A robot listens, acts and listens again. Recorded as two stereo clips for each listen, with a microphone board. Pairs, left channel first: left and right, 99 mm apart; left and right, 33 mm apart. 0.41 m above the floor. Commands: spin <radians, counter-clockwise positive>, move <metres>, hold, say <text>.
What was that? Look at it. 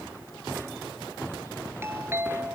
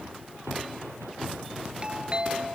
spin -0.44
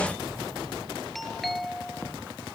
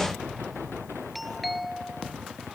say Found it: a doorbell, straight ahead.